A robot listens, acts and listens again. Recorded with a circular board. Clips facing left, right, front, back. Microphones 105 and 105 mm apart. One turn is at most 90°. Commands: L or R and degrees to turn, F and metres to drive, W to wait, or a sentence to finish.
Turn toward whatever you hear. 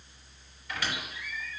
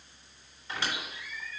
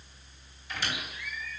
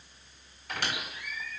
R90
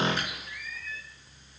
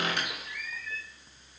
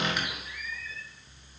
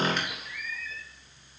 R85
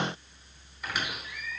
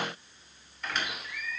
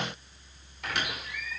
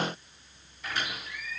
Found it: a squeak, straight ahead, 2 to 4 m away.